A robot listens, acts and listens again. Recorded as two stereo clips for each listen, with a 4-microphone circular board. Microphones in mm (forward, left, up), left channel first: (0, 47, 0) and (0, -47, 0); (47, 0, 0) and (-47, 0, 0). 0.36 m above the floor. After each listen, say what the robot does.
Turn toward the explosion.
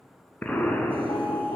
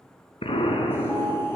Turn 15° left.
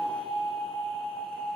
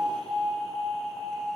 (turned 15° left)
I heard an explosion from this way, but can't make it out now.